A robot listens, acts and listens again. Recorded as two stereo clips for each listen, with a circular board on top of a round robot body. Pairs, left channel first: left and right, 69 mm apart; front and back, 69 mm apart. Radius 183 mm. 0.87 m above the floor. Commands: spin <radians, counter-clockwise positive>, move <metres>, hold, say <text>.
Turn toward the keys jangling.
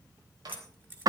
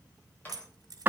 spin -2.71
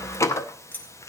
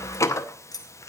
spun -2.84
spin 0.44
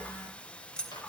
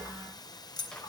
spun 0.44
spin 0.26
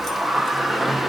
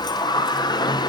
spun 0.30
hold
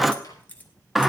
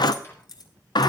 spin 0.44
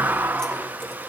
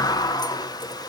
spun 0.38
hold
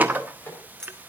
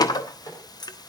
spin 0.17
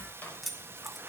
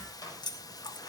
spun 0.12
say Facing the keys jangling.